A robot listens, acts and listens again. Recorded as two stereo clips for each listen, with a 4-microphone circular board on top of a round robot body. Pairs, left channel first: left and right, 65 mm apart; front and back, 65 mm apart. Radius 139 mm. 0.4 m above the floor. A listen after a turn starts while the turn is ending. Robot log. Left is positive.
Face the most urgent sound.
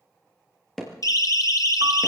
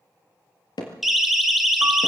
note: The siren: 95° left.
cmd yaw +95
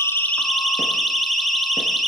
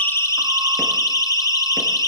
end: Found it: a siren, straight ahead, 2 to 4 m away.